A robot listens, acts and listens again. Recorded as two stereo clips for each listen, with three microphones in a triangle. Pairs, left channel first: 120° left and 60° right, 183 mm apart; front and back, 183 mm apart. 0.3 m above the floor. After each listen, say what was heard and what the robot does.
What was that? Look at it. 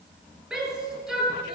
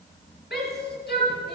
The shout: 25° left. Turn 25° left.
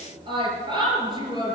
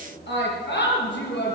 Facing the shout, over 4 m away.